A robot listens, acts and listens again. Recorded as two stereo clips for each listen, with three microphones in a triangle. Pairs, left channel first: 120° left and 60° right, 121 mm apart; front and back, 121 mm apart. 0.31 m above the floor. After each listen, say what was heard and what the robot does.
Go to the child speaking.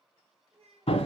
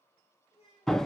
The child speaking: 30° right. Turn 30° right.
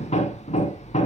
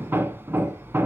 Keep listening.
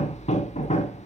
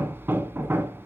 Keep listening.
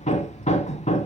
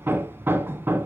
Facing where the child speaking came from. I can't hear it now. I did not reach it.